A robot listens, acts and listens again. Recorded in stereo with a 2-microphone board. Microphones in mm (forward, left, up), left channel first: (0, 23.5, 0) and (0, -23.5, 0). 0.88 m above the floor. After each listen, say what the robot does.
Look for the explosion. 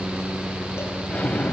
Turn 25° left.
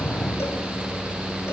Keep listening.
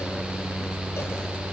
I heard an explosion, but can't make it out now. It was about straight ahead or 130° left.